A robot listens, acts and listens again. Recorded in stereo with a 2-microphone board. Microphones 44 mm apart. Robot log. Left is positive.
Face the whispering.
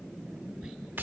note: The whispering: about 20° right or 160° right.
cmd yaw -20
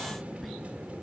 end: Found it: whispering, straight ahead.